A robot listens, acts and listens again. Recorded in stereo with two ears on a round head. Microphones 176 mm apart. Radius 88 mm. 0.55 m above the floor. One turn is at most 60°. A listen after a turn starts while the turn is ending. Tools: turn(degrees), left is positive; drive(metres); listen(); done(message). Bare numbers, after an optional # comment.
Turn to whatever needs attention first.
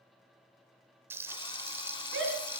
turn(-60)
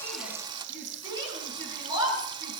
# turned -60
# So it is at 20° right.
turn(-20)
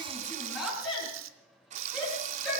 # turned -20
done("Facing the shout, over 4 m away.")